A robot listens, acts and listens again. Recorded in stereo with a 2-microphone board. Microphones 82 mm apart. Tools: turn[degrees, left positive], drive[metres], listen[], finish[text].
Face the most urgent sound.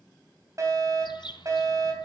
Thought: The fire alarm: about 40° right or 140° right.
Action: turn[-40]
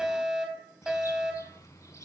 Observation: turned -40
Thought: So it is at 10° right.
Action: turn[-10]
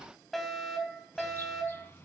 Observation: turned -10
Action: finish[Facing the fire alarm, 2 to 4 m away.]